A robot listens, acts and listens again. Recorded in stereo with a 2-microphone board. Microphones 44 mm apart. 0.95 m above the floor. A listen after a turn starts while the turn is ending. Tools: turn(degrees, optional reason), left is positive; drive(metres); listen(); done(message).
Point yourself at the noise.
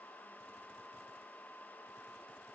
listen()
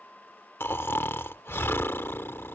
turn(degrees=65, reason="The snoring: about 65° left or 115° left.")
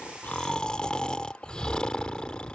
turn(degrees=25, reason="So it is at 25° left.")
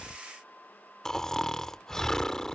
turn(degrees=15, reason="The snoring is now 15° left.")
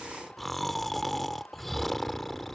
done("Facing the snoring.")